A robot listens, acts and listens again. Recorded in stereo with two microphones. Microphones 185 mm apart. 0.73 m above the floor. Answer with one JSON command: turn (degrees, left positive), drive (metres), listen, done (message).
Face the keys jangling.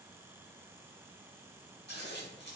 {"listen": true}
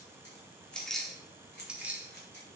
{"turn": -30}
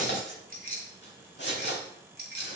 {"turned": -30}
{"turn": -120}
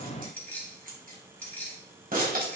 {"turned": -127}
{"turn": 10}
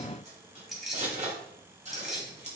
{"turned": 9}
{"done": "Facing the keys jangling."}